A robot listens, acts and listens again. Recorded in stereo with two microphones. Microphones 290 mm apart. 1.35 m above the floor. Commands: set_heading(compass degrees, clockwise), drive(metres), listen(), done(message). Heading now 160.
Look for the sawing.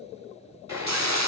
set_heading(225)
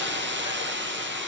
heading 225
listen()
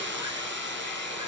listen()
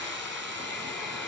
done("Found it: sawing, straight ahead, 2 to 4 m away.")